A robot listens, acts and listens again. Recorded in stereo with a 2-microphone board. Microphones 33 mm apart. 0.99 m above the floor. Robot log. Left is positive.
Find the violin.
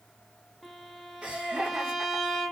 cmd yaw +30
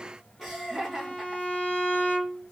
note: So it is at 145° left.
cmd yaw +145
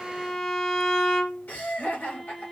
note: The violin is now 10° left.
cmd yaw +10
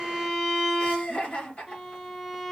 end: Found it: a violin, straight ahead.